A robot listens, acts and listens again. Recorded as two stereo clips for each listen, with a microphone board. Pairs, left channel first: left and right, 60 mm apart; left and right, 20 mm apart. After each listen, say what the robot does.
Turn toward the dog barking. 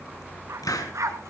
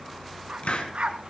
Turn 55° right.
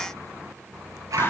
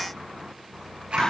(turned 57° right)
Turn 75° right.
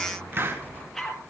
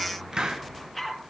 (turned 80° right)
Facing the dog barking, 2 to 4 m away.